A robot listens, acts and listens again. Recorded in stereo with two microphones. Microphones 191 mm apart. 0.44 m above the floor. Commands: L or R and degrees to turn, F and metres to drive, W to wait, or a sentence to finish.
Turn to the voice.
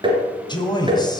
L25
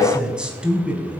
Facing the man speaking, 2 to 4 m away.